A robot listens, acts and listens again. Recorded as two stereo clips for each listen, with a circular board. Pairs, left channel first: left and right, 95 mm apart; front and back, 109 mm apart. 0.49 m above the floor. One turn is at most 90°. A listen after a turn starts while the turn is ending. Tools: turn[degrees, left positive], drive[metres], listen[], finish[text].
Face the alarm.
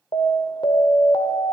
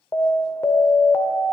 Thought: The alarm: 60° left.
Action: turn[60]
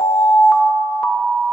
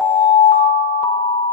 Action: finish[Found it: an alarm, straight ahead.]